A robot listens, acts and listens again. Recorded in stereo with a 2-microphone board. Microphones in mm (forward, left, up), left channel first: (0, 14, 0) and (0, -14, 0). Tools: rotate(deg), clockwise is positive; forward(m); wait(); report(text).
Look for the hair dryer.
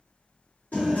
wait()
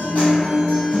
wait()
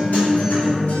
report("I can't make out a hair dryer to turn to.")